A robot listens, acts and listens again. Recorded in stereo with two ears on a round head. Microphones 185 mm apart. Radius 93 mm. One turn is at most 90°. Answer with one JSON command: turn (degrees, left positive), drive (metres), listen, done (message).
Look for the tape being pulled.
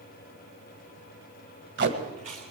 {"turn": -60}
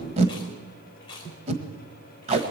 {"turn": -35}
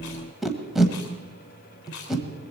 {"done": "Found it: tape being pulled, straight ahead."}